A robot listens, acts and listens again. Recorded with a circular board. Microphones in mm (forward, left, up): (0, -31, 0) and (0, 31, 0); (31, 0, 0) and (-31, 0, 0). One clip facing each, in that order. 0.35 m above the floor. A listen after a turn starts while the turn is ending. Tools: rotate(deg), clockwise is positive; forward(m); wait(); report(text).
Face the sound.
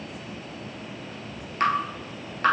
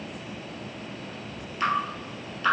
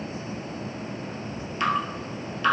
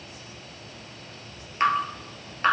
rotate(130)
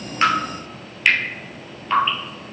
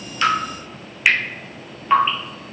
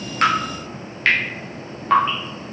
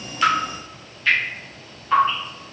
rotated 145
rotate(-15)
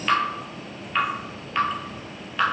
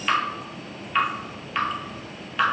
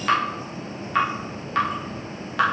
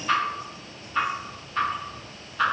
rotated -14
report("Found it: dripping, straight ahead.")